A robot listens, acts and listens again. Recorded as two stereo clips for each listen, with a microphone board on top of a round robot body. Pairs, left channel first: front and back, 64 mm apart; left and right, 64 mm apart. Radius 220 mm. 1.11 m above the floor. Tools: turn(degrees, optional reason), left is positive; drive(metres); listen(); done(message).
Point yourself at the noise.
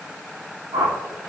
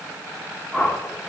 turn(degrees=170, reason="The whoosh: 170° left.")
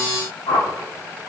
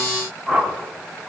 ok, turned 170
done("Found it: a whoosh, straight ahead, 1 to 2 m away.")